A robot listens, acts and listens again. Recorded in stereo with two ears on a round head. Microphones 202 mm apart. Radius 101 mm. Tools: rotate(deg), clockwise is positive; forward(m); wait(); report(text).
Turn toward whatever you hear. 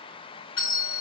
rotate(-60)
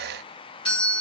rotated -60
rotate(-25)
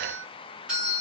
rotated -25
report("Facing the doorbell.")